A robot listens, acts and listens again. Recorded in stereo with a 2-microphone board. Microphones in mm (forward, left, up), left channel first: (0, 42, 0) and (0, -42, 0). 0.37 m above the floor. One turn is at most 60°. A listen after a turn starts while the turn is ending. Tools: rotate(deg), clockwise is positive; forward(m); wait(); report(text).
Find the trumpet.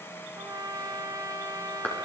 rotate(50)
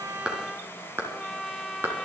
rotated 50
report("Facing the trumpet, 1 to 2 m away.")